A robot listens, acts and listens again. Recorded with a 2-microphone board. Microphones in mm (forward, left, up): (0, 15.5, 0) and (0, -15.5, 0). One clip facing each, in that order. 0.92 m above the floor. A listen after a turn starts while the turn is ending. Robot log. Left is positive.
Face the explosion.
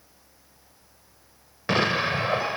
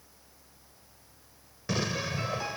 note: The explosion: about 45° left or 135° left.
cmd yaw +45
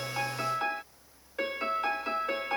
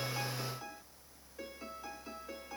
cmd idle
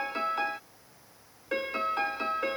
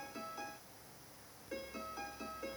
end: I heard an explosion, but can't make it out now. It was about straight ahead or 90° left.